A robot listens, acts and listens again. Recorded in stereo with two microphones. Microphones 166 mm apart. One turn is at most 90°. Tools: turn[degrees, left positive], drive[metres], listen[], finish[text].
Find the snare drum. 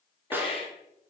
Action: turn[-30]
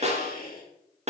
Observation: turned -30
Thought: So it is at 140° right.
Action: turn[-90]
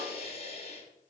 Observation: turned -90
Thought: Nothing new. It was at 50° right.
Action: turn[-50]
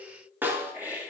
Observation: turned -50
Thought: The snare drum is now 10° right.
Action: turn[-10]
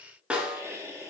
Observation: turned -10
Action: finish[Found it: a snare drum, straight ahead.]